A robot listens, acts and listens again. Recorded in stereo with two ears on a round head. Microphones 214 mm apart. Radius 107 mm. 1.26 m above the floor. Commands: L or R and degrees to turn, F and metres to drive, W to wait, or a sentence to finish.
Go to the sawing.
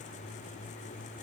W
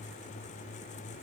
W
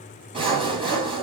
R25
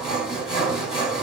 F1.0
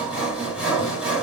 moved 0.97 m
F1.0
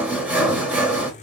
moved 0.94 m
F1.0
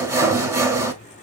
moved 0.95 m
R15
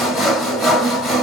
F1.0
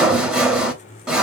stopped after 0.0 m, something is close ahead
Arrived at the sawing, straight ahead.